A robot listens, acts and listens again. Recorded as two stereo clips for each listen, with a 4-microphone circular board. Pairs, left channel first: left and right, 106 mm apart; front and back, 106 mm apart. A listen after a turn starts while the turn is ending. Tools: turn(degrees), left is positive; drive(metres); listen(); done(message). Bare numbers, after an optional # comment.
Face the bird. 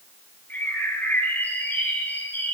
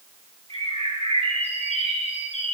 # The bird: 160° left.
turn(160)
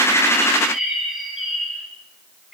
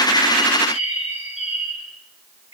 done("Found it: a bird, straight ahead, over 4 m away.")